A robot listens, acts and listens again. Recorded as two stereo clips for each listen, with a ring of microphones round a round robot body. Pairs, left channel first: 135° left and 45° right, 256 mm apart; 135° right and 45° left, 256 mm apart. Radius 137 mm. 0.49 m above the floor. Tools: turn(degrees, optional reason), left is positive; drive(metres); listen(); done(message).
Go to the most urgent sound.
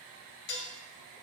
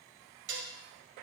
listen()
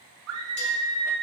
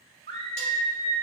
turn(degrees=-10, reason="The scream: 10° right.")
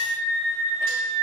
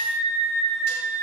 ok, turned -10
drive(metres=1.0)
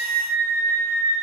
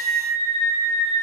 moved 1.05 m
turn(degrees=-10, reason="The scream is now 10° right.")
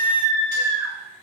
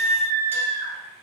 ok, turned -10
drive(metres=1.0)
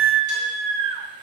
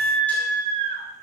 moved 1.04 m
drive(metres=1.0)
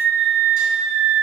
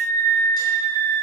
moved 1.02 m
turn(degrees=-10, reason="The scream is now 10° right.")
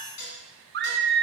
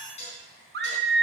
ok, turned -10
drive(metres=1.0)
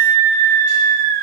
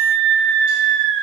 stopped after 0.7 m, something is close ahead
done("I am next to the scream.")